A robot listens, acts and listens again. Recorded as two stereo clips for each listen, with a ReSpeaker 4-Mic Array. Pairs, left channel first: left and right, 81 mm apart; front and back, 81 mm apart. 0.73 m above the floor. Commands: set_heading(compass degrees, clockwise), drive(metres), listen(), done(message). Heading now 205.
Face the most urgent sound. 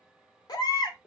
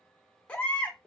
set_heading(130)
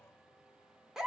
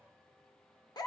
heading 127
done("Found it: a baby crying, straight ahead.")